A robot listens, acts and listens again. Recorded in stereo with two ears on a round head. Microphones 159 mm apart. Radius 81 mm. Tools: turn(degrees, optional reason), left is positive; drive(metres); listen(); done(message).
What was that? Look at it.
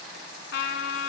turn(degrees=65, reason="The trumpet: about 65° left or 115° left.")
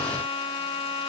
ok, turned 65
turn(degrees=35, reason="So it is at 35° left.")
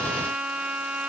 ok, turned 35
done("Facing the trumpet.")